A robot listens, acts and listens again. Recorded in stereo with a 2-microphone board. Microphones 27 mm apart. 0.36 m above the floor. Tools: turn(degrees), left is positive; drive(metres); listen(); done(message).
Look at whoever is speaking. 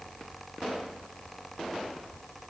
listen()
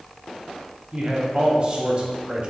turn(degrees=-35)
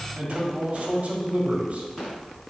turn(degrees=-100)
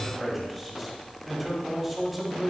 done("Found it: a man speaking, straight ahead, 1 to 2 m away.")